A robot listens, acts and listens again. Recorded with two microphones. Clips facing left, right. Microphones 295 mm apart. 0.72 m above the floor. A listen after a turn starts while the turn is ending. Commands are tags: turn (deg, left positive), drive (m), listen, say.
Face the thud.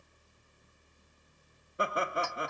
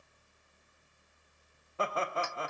<listen/>
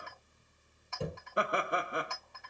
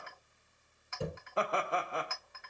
<turn deg="30"/>
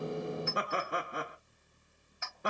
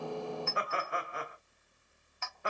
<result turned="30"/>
<listen/>
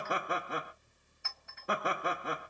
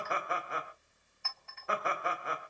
<say>I heard a thud, but can't make it out now. It was about 30° right or 150° left.</say>